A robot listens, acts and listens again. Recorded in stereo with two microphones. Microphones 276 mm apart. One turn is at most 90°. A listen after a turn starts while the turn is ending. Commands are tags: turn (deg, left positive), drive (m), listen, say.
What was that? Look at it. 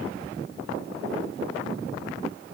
<listen/>
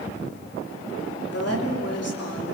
<turn deg="60"/>
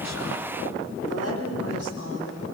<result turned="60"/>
<turn deg="60"/>
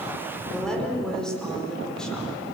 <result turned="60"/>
<say>Found it: a woman speaking, straight ahead.</say>